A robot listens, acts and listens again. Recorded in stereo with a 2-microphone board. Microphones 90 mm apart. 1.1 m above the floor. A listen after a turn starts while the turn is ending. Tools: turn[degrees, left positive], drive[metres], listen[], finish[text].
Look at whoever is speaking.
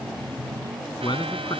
Thought: The man speaking: about 60° left or 120° left.
Action: turn[60]
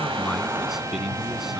Action: listen[]
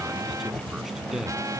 Action: listen[]
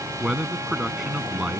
Action: finish[Found it: a man speaking, straight ahead.]